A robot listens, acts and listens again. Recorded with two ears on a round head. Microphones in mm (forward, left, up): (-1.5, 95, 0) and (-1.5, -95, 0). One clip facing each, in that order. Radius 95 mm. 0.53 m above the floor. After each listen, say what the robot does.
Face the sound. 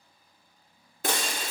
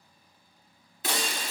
Turn 40° left.
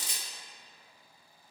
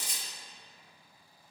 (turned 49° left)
Turn 80° left.
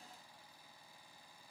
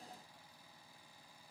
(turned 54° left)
Turn 25° left.
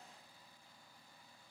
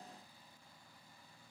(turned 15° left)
Turn 10° left.
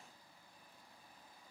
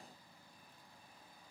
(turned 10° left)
I heard breaking glass from this way, but can't make it out now.